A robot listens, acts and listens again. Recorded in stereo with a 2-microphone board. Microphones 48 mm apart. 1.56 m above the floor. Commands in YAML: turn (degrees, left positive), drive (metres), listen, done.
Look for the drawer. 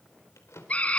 turn: 90
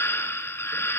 listen: true
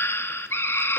listen: true
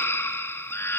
done: "I heard a drawer from this way, but can't make it out now."